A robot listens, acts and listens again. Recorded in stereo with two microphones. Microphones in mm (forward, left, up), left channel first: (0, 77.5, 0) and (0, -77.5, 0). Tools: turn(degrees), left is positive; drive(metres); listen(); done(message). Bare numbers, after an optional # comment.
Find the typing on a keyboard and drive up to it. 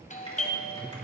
# The typing on a keyboard: about 35° left or 145° left.
turn(35)
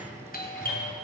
drive(1.0)
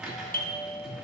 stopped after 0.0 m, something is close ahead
done("Something is in my way. I am facing the typing on a keyboard but have not reached it.")